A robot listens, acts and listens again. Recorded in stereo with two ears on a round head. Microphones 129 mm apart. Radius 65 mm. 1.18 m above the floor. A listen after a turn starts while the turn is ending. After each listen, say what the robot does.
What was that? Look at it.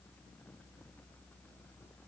Keep listening.
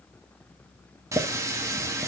Turn 20° right.
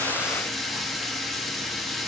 Found it: a running tap, straight ahead.